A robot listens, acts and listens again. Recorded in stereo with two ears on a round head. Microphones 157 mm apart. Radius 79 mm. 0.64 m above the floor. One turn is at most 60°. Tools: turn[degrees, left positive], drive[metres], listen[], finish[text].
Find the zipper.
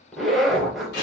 Action: turn[30]
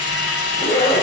Thought: So it is at 150° left.
Action: turn[60]
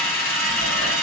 Thought: Nothing new. It was at 90° left.
Action: turn[60]
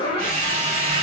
Thought: The zipper is now 30° left.
Action: turn[30]
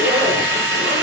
Action: listen[]
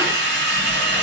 Action: listen[]
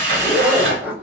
Thought: The zipper is now 10° right.
Action: turn[-10]
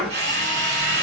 Action: finish[Found it: a zipper, straight ahead, 1 to 2 m away.]